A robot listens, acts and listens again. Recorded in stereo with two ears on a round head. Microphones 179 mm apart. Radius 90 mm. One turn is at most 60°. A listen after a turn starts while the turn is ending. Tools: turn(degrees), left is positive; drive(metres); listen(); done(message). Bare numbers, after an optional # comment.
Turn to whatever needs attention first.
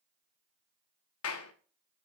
listen()
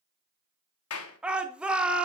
turn(-30)
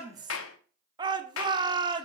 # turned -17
# So it is at 155° right.
turn(-60)
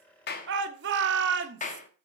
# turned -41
# The shout is now 115° right.
turn(-60)
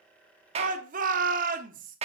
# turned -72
# The shout is now 40° right.
turn(-40)
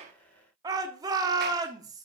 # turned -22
# The shout is now 20° right.
turn(-20)
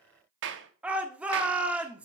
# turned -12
done("Found it: a shout, straight ahead, 1 to 2 m away.")